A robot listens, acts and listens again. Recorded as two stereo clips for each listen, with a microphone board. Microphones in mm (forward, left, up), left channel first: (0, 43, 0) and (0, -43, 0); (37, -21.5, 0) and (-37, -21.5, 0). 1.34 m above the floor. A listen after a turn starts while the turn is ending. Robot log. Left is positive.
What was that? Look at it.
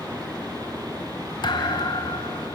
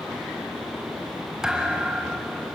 note: The thud: 100° left.
cmd yaw +100
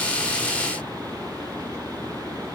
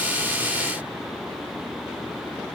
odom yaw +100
end: Facing where the thud came from. I can't hear it now.